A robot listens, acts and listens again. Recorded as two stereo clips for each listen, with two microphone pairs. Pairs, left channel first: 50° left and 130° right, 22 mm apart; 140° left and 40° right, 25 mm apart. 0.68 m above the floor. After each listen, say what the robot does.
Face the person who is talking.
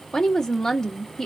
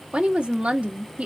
Turn 10° right.
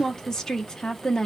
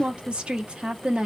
Found it: a woman speaking, straight ahead, 1 to 2 m away.